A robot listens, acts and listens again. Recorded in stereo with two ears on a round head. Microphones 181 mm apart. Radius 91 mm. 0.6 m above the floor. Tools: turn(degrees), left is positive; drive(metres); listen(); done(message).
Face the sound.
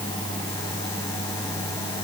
listen()
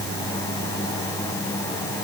listen()
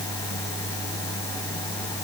done("I can't make out anything.")